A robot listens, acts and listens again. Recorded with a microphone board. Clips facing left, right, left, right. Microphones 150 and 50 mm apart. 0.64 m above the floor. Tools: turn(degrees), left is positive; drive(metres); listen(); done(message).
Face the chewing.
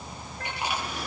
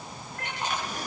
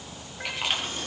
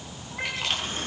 turn(degrees=30)
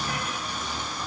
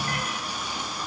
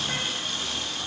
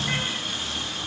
listen()
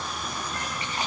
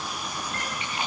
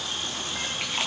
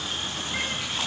turn(degrees=140)
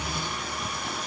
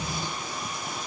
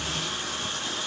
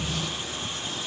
listen()
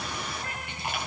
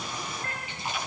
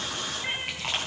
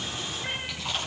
turn(degrees=60)
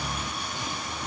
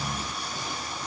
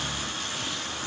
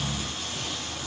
listen()
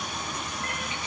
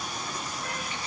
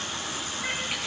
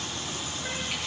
listen()
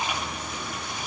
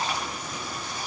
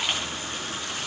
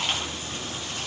turn(degrees=15)
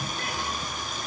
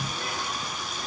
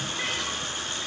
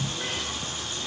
listen()
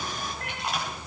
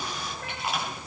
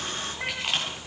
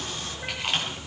done("Facing the chewing, over 4 m away.")